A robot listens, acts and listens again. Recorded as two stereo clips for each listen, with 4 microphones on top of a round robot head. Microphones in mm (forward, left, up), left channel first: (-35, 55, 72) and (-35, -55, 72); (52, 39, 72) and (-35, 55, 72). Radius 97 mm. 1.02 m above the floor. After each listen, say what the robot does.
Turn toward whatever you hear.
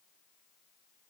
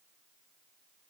Keep listening.
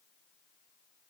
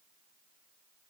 Keep listening.
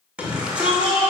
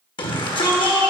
Turn 10° right.
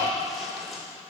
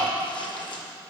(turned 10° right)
Keep listening.
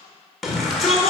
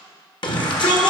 Facing the shout, 1 to 2 m away.